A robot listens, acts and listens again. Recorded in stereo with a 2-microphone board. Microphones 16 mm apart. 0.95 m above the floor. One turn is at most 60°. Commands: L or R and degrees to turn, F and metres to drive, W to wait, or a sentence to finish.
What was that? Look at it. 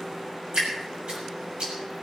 R60
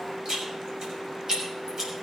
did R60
R45
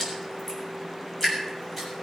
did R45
Facing the dripping, over 4 m away.